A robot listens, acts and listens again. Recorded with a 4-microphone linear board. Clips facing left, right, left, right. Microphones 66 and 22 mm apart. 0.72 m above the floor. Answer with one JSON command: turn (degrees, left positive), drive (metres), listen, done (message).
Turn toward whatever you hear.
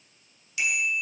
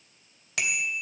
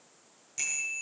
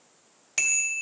{"turn": -90}
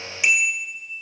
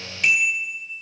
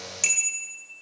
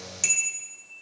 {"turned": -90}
{"turn": 10}
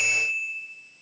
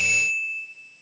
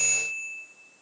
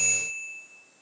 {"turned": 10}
{"done": "Found it: a bicycle bell, straight ahead."}